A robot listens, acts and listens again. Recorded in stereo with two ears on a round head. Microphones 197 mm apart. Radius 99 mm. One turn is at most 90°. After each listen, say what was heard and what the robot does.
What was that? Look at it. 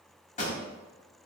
The pop: about 35° left or 145° left. Turn 35° left.
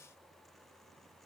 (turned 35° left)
Keep listening.
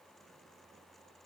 I heard a pop, but can't make it out now. It was about straight ahead or 110° left.